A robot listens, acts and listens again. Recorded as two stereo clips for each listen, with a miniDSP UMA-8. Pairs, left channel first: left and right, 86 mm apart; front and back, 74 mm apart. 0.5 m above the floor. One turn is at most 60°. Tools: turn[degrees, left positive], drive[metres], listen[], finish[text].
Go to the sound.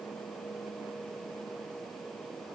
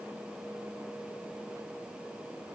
Action: listen[]
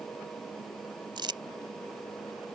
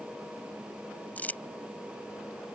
Thought: The crumpling: 65° right.
Action: turn[-60]
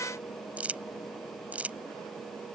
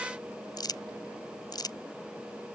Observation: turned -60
Thought: The crumpling is now 15° right.
Action: turn[-15]
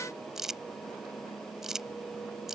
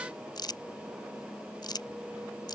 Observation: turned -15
Action: drive[1.0]
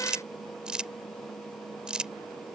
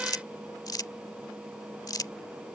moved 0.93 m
Thought: The crumpling is now 10° right.
Action: turn[-10]
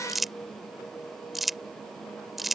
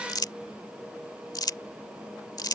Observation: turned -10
Action: drive[1.0]
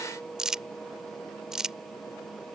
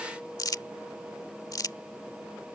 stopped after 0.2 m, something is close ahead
Thought: The crumpling is now 10° right.
Action: turn[-10]
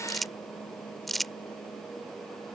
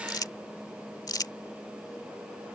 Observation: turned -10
Action: finish[Arrived at the crumpling, straight ahead.]